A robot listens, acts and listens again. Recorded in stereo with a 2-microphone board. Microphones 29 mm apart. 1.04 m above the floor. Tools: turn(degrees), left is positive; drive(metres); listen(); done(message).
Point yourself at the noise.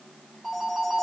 turn(degrees=-30)
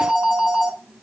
turn(degrees=-145)
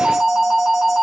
done("Facing the phone ringing.")